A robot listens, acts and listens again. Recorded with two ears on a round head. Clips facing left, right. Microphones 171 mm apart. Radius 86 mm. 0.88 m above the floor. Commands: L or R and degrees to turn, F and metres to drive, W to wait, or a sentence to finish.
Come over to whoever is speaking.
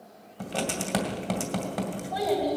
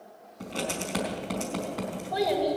R25
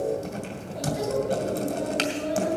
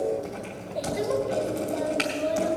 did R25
R130
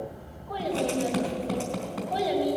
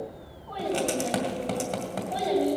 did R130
F1.0
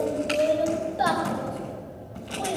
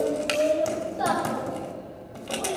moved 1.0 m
L10
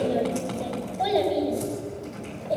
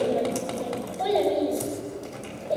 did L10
F1.0
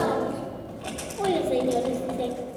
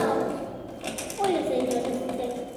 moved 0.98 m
F1.0
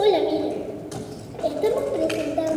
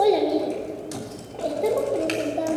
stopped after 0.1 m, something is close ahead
Arrived at the child speaking, straight ahead.